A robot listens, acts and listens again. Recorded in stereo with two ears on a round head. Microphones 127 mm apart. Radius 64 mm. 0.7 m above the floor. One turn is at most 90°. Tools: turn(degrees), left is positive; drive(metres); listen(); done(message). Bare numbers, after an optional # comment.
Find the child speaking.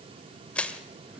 listen()
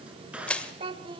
# The child speaking: about 35° right or 145° right.
turn(-35)
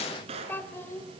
# So it is at 20° left.
turn(20)
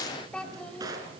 # The child speaking is now 10° left.
turn(10)
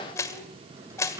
listen()
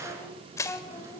# The child speaking is now 15° left.
turn(15)
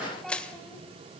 listen()
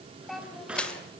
done("Found it: a child speaking, straight ahead, 2 to 4 m away.")